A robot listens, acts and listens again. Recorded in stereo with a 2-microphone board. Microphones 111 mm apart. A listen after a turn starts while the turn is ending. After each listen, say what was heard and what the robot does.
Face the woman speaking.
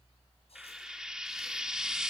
Keep listening.
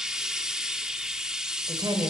The woman speaking: about 35° right or 145° right. Turn 35° right.
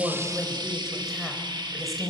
Facing the woman speaking.